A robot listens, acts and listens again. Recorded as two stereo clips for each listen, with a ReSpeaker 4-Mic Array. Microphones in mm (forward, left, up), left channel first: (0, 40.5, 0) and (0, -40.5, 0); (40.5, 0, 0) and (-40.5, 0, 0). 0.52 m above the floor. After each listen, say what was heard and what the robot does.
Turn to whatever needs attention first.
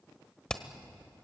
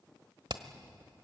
Keep listening.
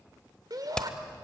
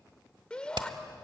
The shout: 75° right. Turn 75° right.
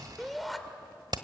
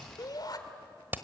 Facing the shout.